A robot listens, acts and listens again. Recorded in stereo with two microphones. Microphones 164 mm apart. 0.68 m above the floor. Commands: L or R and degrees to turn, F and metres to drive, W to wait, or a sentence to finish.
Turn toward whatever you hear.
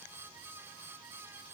W
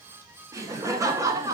R20
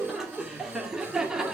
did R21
R30
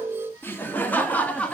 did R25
Found it: laughter, straight ahead, 1 to 2 m away.